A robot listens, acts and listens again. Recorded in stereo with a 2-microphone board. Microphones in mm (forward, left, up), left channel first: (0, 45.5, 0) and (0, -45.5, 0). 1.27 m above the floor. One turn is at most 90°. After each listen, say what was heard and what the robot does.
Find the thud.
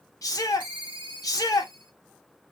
Keep listening.
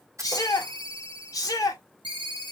The thud: about 35° right or 145° right. Turn 35° right.
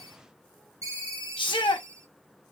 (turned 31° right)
Keep listening.
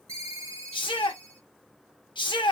I heard a thud, but can't make it out now. It was about 5° right or 115° right.